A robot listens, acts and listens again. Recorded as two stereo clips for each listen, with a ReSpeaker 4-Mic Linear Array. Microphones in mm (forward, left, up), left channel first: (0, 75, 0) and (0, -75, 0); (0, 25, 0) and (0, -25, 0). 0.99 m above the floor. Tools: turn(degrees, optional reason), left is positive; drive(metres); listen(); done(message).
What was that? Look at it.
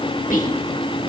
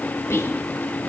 turn(degrees=65, reason="The whispering: about 65° left or 115° left.")
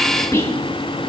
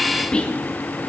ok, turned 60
turn(degrees=20, reason="So it is at 20° left.")
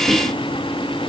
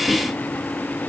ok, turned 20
listen()
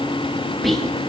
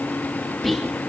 done("Found it: whispering, straight ahead.")